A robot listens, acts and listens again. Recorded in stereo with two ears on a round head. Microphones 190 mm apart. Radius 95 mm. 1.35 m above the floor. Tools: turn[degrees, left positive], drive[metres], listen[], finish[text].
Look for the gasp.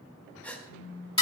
Action: turn[30]
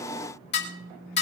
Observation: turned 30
Action: listen[]
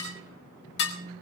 Action: finish[I heard a gasp, but can't make it out now. It was about 25° right or 145° left.]